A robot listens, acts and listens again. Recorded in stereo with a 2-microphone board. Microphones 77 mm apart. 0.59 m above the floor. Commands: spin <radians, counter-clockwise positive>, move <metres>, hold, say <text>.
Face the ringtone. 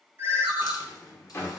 spin -0.52
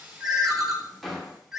say Facing the ringtone, under 1 m away.